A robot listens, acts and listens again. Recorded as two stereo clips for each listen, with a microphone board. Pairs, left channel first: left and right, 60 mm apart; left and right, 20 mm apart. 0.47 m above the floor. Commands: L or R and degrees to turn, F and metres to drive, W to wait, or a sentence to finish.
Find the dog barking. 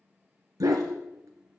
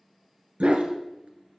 R90
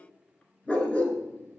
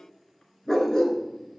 L25
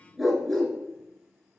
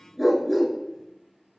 Found it: a dog barking, straight ahead, 1 to 2 m away.